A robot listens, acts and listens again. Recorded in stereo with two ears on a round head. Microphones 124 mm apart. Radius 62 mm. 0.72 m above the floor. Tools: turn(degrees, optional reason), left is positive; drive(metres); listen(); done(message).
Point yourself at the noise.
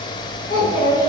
turn(degrees=35, reason="The child speaking: about 35° left or 145° left.")
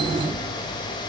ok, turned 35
listen()
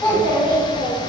done("Found it: a child speaking, straight ahead.")